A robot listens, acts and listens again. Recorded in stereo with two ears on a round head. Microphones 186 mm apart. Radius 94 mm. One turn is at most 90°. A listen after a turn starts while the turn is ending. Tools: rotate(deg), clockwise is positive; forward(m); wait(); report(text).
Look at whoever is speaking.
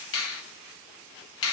wait()
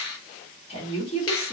rotate(-30)
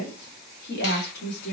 rotate(-90)
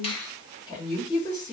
rotate(-25)
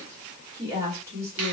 rotate(15)
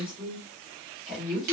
report("Facing the woman speaking, 1 to 2 m away.")